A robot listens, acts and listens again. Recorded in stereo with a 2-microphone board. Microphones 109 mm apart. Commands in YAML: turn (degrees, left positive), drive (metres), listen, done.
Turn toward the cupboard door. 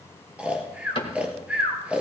turn: 50
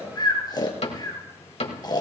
turn: 75
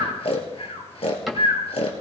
done: "Found it: a cupboard door, straight ahead."